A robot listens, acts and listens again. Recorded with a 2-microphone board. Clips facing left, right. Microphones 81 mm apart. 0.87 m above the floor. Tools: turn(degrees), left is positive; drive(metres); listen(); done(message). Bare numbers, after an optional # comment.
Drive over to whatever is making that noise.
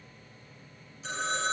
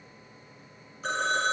# The phone ringing: about 55° right or 125° right.
turn(-55)
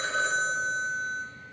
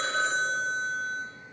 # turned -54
drive(1.0)
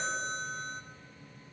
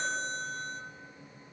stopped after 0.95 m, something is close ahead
done("I am next to the phone ringing.")